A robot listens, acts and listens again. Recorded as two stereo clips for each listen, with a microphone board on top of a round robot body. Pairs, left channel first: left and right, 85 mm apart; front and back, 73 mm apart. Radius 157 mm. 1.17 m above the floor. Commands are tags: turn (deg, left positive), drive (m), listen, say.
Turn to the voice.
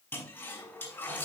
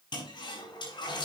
<listen/>
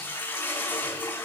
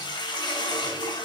<listen/>
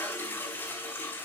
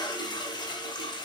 <say>I can't make out anyone speaking to turn to.</say>